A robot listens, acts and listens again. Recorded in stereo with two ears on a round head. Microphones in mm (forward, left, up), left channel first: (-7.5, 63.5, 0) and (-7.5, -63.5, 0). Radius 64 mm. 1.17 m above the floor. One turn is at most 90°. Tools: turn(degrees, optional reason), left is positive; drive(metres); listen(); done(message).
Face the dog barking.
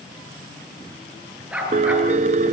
turn(degrees=-30)
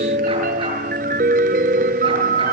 listen()
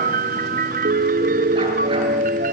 listen()
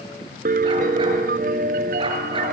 done("I heard a dog barking, but can't make it out now. It was about 20° left or 140° right.")